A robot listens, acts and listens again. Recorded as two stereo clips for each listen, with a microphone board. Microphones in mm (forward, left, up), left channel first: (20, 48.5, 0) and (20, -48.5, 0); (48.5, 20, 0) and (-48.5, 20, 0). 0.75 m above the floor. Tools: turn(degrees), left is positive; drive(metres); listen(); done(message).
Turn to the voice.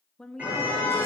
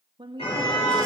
turn(degrees=170)
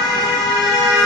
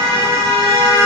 listen()
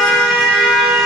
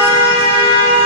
listen()
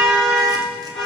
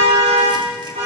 done("I heard a woman speaking from this way, but can't make it out now.")